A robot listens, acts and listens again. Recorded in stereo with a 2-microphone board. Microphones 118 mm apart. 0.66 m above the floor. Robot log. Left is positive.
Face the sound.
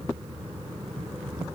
cmd idle
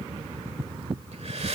note: The breathing: about 65° right or 115° right.
cmd yaw -65
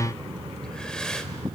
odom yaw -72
end: Facing the breathing, 1 to 2 m away.